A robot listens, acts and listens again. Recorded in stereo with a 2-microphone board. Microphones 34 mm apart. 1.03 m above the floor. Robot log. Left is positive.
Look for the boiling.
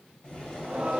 note: The boiling: about 35° left or 145° left.
cmd yaw +35
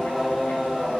cmd idle
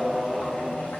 cmd idle
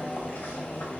note: So it is at 105° left.
cmd yaw +105
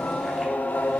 cmd idle
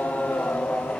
cmd idle
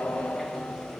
end: Facing the boiling, 2 to 4 m away.